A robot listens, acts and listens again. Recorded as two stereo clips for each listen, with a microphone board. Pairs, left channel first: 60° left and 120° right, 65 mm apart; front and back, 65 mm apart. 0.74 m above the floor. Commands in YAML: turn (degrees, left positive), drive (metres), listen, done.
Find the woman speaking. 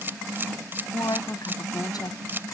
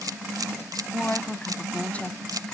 turn: 70
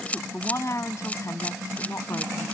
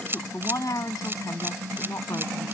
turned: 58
turn: 25
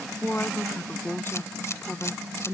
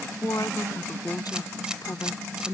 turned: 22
done: "Found it: a woman speaking, straight ahead."